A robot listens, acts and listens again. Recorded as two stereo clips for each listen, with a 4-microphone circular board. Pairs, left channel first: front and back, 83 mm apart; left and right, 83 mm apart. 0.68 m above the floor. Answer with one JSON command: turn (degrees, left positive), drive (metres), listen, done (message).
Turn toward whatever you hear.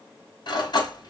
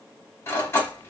{"turn": 30}
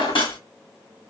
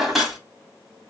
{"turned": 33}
{"done": "Found it: cutlery clinking, straight ahead, 1 to 2 m away."}